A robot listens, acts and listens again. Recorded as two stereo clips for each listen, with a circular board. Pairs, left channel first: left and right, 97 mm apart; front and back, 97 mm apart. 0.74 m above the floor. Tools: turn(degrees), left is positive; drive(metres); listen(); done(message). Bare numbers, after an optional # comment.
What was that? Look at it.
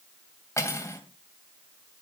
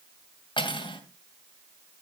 # The cutlery clinking: 30° left.
turn(30)
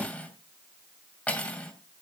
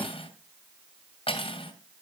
# The cutlery clinking is now 15° left.
turn(15)
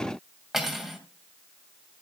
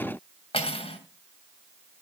done("Facing the cutlery clinking, 2 to 4 m away.")